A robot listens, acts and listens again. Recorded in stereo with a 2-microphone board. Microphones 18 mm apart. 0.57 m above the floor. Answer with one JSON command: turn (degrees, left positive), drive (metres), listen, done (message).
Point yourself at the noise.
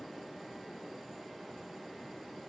{"listen": true}
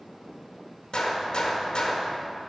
{"turn": 55}
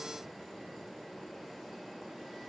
{"listen": true}
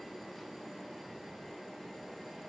{"done": "I heard a gunshot, but can't make it out now. It was about straight ahead or 70° left."}